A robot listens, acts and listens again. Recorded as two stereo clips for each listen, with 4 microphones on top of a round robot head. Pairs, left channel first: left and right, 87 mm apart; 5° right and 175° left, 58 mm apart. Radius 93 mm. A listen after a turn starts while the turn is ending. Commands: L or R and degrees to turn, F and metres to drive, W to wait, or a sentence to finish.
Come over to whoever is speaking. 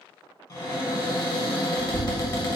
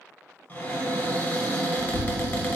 L110
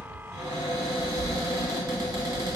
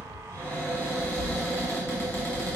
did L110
F1.0
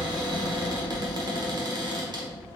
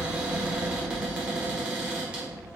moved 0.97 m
L10
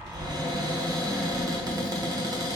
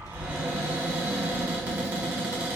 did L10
F1.0
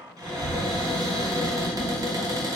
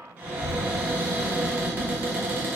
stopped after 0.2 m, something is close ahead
L10
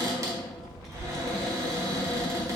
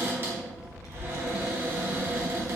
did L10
I am next to the child speaking.